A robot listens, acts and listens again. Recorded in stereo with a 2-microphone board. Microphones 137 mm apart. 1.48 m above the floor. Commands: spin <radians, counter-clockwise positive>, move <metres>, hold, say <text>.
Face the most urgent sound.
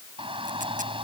spin -0.70
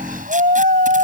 spin -1.75
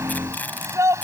spin -0.35
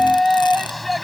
say Found it: a shout, straight ahead.